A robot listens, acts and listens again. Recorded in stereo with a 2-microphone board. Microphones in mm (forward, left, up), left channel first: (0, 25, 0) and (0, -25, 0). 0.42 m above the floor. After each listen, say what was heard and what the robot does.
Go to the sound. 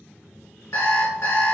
The alarm clock: about 65° left or 115° left. Turn 65° left.
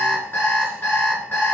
So it is at 45° left. Turn 45° left.
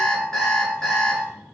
The alarm clock is now 10° left. Turn 10° left.
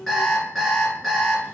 Drive 1.0 m forward.
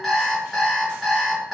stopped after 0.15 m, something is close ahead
Blocked. The alarm clock is further on, straight ahead.